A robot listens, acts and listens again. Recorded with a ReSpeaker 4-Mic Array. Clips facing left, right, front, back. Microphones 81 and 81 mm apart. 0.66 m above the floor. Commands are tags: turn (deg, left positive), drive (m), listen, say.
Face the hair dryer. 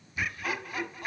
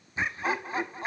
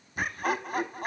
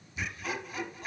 <listen/>
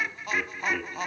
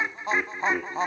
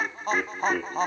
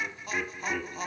<listen/>
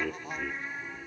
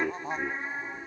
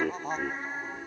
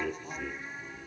<say>I can't make out a hair dryer, only laughter.</say>